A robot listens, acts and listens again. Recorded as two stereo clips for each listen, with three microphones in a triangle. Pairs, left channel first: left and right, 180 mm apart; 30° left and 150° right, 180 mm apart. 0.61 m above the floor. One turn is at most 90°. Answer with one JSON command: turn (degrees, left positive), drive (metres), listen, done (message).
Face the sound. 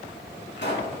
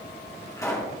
{"turn": 90}
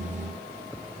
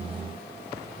{"turn": 10}
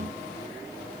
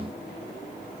{"done": "I heard a pop from this way, but can't make it out now."}